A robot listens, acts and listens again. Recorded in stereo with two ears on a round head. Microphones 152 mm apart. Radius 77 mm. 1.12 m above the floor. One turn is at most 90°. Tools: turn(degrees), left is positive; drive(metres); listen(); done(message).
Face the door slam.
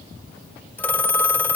listen()
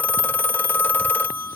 listen()
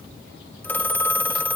done("I can't make out a door slam to turn to.")